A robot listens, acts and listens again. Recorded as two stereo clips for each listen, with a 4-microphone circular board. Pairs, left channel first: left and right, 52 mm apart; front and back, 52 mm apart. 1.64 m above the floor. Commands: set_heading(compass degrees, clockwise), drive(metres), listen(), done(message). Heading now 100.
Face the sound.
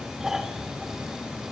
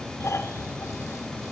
set_heading(110)
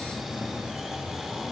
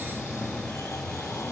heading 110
listen()
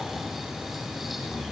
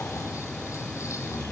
listen()
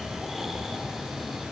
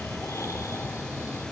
done("I heard snoring from this way, but can't make it out now.")